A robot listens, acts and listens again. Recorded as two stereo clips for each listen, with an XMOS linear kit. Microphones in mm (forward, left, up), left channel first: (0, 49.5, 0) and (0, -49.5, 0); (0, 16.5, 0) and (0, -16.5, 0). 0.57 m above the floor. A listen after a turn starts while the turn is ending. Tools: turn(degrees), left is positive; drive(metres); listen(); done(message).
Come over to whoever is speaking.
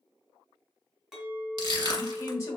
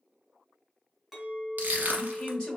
turn(degrees=30)
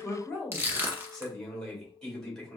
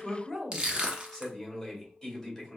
drive(metres=1.0)
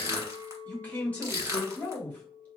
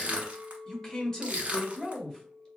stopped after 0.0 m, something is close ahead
turn(degrees=15)
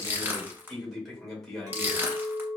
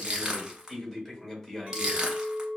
done("Something is in my way. I am facing the man speaking but have not reached it.")